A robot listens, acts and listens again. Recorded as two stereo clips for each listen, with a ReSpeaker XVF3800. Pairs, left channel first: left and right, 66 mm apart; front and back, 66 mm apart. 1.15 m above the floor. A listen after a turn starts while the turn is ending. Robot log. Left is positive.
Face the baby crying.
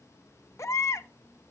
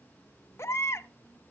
note: The baby crying: 45° left.
cmd yaw +45
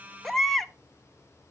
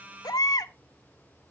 end: Found it: a baby crying, straight ahead, under 1 m away.